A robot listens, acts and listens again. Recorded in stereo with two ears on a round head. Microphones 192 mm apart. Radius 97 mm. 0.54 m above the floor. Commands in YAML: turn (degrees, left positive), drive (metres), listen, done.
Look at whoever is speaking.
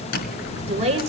turn: -30
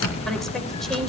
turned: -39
listen: true
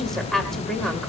done: "Found it: a woman speaking, straight ahead."